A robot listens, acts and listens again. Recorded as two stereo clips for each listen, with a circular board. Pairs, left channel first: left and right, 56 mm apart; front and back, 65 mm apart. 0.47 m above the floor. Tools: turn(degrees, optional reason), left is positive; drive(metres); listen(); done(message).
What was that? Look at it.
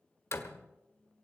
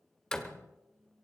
turn(degrees=75, reason="The door slam: 75° left.")
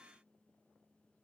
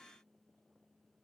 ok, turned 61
turn(degrees=15, reason="Nothing new. It was at 15° left.")
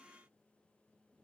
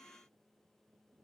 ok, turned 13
done("I heard a door slam from this way, but can't make it out now.")